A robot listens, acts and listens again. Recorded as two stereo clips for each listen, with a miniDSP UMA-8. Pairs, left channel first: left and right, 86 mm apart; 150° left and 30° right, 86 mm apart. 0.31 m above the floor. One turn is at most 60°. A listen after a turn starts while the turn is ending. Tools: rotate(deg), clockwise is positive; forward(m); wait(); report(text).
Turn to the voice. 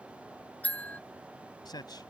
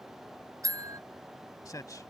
rotate(-60)
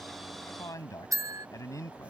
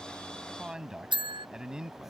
rotate(-50)
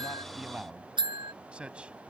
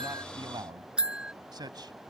rotate(15)
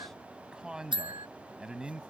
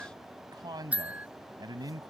rotate(10)
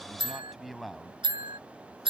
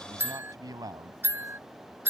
report("Found it: a man speaking, straight ahead.")